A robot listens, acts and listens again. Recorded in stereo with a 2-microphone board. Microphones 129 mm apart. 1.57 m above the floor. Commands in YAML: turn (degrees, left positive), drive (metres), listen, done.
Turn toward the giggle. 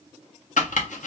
listen: true
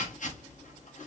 listen: true
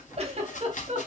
turn: -50
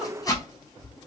listen: true
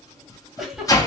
done: "Facing the giggle."